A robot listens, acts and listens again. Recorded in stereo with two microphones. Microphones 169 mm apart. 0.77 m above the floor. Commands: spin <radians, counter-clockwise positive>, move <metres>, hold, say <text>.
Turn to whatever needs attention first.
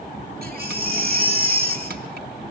spin -1.05
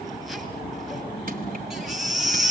say Found it: a baby crying, straight ahead, over 4 m away.